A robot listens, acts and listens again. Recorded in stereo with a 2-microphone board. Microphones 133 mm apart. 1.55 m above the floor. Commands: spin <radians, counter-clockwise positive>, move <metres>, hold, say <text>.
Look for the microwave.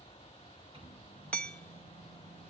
spin -0.70
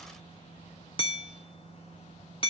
spin -1.66
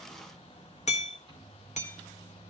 spin -0.70
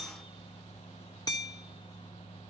say Facing the microwave.